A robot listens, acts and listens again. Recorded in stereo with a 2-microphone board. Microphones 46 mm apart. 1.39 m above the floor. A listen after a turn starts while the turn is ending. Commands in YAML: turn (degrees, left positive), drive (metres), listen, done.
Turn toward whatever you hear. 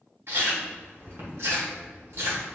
turn: -70
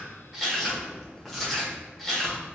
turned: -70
done: "Found it: chewing, straight ahead."